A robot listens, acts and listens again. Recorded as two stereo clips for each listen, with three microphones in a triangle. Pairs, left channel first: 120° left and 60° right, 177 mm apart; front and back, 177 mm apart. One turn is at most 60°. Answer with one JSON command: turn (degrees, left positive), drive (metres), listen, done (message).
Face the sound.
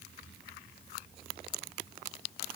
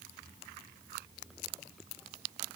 {"listen": true}
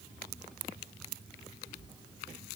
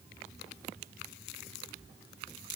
{"listen": true}
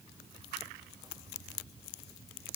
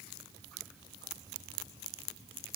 {"done": "I can't make out anything."}